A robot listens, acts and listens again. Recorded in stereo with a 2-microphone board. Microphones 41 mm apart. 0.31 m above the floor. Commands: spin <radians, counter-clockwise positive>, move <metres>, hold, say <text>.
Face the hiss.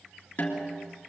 hold
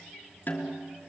hold
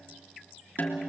say I can't make out a hiss, only a snare drum.